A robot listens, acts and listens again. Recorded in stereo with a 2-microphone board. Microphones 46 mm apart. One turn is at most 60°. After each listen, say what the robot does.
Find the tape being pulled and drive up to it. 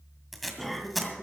Turn 30° left.
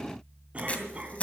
Turn 60° left.
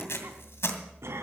Turn 60° left.
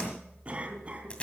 Turn 25° left.
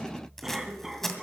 Drive 1.0 m forward.
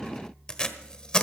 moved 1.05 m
Turn 20° left.
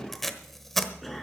Drive 1.0 m forward.
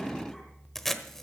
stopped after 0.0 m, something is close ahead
I am next to the tape being pulled.